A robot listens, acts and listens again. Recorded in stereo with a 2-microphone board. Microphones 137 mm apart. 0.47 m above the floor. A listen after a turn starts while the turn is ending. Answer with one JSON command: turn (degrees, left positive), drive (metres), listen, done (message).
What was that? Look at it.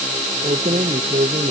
{"turn": -60}
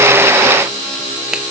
{"listen": true}
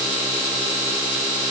{"listen": true}
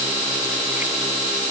{"done": "I heard keys jangling, but can't make it out now. It was about straight ahead or 60° right."}